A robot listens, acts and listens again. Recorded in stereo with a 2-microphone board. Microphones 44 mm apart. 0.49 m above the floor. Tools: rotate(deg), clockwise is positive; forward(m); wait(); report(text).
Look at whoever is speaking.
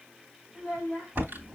rotate(40)
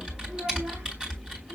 wait()
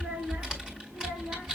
rotate(110)
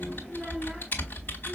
wait()
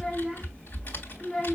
rotate(-10)
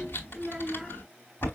report("Facing the child speaking.")